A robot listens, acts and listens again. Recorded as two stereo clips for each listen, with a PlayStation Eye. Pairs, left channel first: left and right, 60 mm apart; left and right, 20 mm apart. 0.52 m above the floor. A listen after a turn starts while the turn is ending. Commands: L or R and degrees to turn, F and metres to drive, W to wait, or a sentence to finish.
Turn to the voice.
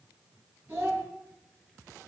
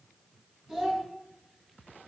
R35
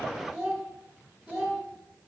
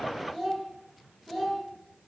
Facing the child speaking.